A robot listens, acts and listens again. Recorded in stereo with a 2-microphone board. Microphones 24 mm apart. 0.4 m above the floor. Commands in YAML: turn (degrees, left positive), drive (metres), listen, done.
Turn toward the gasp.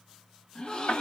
turn: 40
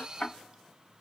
listen: true
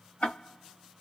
done: "I heard a gasp, but can't make it out now. It was about straight ahead or 100° left."